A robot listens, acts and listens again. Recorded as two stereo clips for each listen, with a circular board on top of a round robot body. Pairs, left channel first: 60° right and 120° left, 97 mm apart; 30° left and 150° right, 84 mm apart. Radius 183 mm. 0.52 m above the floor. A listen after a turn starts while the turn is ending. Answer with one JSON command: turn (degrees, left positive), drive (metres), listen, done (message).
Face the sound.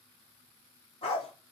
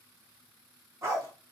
{"turn": -95}
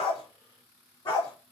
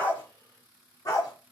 {"turn": -15}
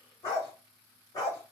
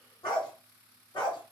{"done": "Facing the dog barking."}